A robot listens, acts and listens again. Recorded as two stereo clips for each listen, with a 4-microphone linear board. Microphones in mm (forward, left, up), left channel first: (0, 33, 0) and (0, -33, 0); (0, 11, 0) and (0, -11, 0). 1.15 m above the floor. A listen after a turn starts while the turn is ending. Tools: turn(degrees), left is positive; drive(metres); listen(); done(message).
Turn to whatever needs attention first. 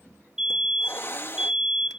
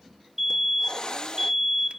turn(degrees=-30)
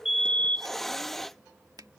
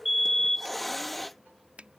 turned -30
turn(degrees=20)
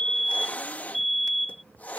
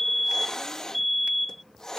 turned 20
done("Found it: a fire alarm, straight ahead.")